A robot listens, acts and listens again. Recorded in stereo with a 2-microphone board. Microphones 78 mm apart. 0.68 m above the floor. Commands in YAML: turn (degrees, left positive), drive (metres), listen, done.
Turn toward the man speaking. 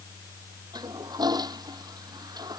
listen: true
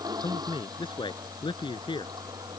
turn: 90
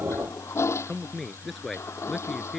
done: "Found it: a man speaking, straight ahead."